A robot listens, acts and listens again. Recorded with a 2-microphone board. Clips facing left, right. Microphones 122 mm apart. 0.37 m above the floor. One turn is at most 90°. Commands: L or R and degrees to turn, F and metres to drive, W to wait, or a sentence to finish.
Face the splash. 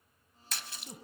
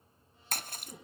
R50
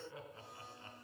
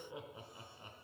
W
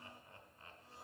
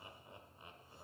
I heard a splash, but can't make it out now. It was about straight ahead or 80° right.